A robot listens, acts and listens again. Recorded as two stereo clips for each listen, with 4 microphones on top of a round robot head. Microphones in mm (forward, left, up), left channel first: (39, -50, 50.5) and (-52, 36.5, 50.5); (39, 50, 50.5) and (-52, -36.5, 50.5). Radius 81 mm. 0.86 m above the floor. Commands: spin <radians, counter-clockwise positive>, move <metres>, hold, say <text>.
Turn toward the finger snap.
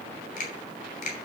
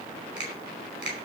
spin -0.96
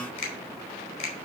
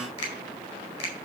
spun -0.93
say Facing the finger snap.